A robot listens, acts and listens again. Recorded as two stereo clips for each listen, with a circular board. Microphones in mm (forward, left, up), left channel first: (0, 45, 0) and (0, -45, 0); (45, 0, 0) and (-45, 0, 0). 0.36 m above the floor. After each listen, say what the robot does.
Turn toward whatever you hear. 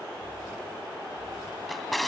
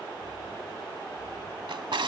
Turn 180° left.
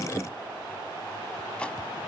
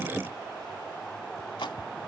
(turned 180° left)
Keep listening.
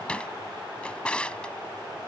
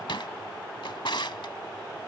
Turn 15° left.
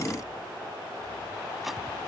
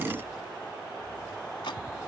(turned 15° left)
Keep listening.
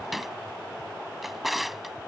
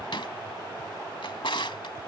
Found it: a drawer, straight ahead.